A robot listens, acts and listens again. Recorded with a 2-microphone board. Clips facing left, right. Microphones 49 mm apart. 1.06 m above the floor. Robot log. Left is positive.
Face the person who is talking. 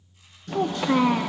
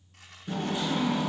note: The child speaking: about 65° left or 115° left.
cmd yaw +65
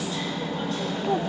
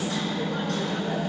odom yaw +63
cmd idle
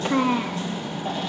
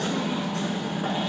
note: So it is at 50° left.
cmd yaw +50
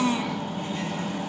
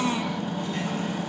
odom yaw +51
end: Found it: a child speaking, straight ahead, under 1 m away.